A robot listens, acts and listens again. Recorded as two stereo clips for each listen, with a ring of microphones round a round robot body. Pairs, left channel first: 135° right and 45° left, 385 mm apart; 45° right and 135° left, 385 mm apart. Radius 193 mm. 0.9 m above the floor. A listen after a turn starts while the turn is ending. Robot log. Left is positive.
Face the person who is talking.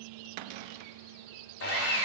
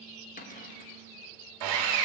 cmd idle
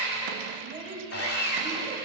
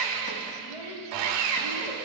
note: The child speaking: 30° right.
cmd yaw -30
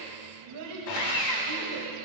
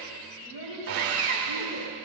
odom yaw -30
end: Found it: a child speaking, straight ahead.